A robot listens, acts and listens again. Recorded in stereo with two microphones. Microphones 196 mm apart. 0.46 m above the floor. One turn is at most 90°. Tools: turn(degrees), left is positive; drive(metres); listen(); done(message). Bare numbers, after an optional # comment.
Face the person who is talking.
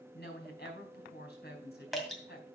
# The woman speaking: about 60° left or 120° left.
turn(60)
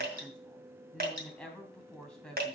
done("Found it: a woman speaking, straight ahead.")